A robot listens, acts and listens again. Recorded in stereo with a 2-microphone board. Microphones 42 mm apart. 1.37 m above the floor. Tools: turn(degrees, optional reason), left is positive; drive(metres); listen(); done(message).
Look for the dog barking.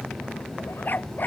turn(degrees=50, reason="The dog barking: about 50° left or 130° left.")
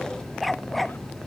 done("Facing the dog barking.")